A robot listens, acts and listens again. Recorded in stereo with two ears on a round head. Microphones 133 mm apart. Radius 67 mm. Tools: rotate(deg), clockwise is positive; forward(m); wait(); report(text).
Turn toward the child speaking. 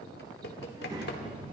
rotate(35)
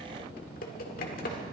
rotate(20)
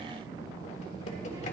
rotate(25)
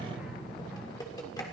rotate(10)
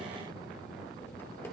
report("Facing the child speaking.")